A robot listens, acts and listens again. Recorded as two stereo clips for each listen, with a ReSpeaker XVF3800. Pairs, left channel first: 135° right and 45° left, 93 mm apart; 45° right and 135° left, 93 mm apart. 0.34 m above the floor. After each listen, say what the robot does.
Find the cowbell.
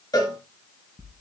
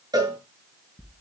Turn 180° left.
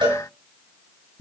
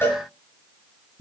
Turn 20° left.
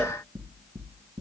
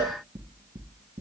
Keep listening.
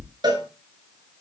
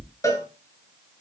Turn 10° left.
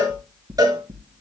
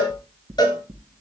Found it: a cowbell, straight ahead, over 4 m away.